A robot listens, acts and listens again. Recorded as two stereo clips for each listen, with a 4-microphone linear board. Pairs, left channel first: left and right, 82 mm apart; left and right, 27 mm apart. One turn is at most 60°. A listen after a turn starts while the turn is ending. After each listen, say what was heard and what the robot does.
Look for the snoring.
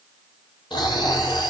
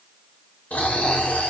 Turn 60° left.
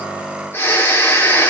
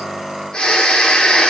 So it is at 30° left. Turn 30° left.
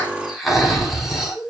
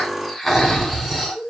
Found it: snoring, straight ahead.